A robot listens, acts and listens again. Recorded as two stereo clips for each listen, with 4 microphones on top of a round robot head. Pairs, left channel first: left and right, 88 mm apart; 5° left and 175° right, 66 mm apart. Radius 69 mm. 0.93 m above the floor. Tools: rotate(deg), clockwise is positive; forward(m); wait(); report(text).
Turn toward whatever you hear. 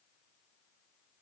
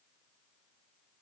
wait()
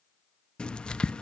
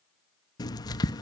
rotate(-10)
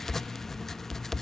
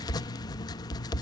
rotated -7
report("Facing the writing.")